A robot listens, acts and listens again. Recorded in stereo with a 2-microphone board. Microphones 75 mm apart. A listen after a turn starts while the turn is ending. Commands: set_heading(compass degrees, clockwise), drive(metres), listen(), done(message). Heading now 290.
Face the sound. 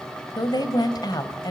set_heading(225)
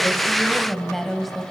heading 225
done("Found it: a woman speaking, straight ahead, 2 to 4 m away.")